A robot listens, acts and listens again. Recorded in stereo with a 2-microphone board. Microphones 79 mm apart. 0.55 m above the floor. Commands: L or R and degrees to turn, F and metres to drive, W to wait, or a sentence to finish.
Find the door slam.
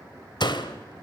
L70
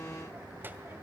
W
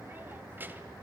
I heard a door slam, but can't make it out now. It was about straight ahead or 40° left.